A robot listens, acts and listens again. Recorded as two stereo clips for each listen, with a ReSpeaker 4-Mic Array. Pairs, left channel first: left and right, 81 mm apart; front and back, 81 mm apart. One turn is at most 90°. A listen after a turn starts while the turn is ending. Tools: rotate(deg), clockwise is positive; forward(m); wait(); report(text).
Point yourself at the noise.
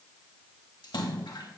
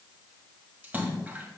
rotate(-90)
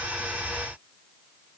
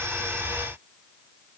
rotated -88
rotate(-25)
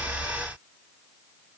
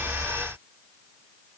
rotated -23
report("Facing where the splash came from. I can't hear it now.")